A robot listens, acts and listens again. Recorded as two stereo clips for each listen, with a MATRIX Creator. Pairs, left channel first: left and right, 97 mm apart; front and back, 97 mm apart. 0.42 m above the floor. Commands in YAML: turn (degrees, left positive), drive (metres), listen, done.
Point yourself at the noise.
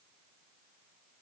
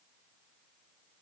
listen: true
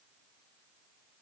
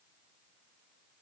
listen: true
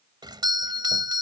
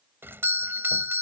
turn: -120
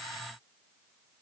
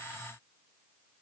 listen: true
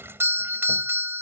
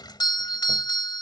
turn: -30
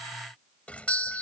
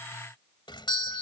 turn: 15
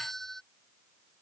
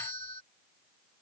done: "Found it: a doorbell, straight ahead."